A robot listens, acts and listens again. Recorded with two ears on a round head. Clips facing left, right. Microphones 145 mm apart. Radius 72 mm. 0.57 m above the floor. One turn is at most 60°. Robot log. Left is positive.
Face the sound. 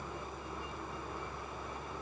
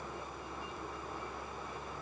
cmd idle
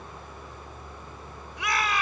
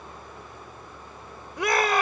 note: The shout: about 40° right or 140° right.
cmd yaw -40
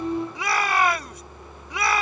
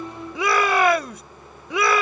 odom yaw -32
note: So it is at 105° right.
cmd yaw -60
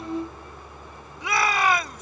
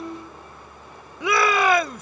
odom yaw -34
note: The shout is now 75° right.
cmd yaw -60
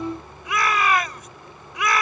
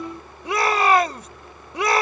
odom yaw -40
note: The shout is now 30° right.
cmd yaw -30
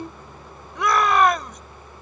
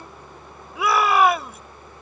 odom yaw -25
end: Facing the shout.